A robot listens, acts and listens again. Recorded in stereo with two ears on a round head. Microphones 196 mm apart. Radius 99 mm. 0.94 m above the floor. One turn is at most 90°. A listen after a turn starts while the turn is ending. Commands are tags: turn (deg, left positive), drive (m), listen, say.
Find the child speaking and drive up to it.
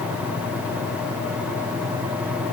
<listen/>
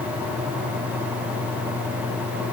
<listen/>
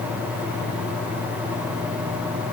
<say>I can't make out a child speaking to turn to.</say>